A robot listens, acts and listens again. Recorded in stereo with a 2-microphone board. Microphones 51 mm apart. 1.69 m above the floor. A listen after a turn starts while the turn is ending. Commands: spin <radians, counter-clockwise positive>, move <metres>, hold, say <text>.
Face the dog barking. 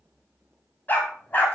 spin 0.70
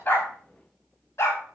spin 1.66
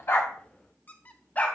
spin 0.61
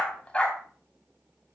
spin 0.44
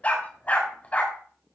spin 0.61
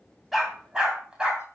spin -0.35
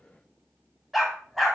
say Found it: a dog barking, straight ahead.